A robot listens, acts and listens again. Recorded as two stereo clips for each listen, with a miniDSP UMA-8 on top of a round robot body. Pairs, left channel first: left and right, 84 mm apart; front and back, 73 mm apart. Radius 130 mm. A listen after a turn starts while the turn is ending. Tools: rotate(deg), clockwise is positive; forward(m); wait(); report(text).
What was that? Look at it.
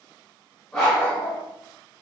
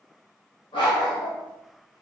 report("Facing the dog barking, 1 to 2 m away.")